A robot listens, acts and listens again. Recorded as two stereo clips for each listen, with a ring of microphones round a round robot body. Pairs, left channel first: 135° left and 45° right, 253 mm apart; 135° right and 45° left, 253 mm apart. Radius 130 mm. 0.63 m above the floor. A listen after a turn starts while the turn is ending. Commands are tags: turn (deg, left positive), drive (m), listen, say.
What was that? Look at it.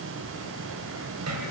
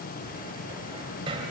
<turn deg="-25"/>
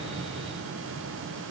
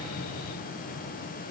<listen/>
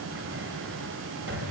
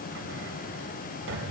<say>Facing the cupboard door.</say>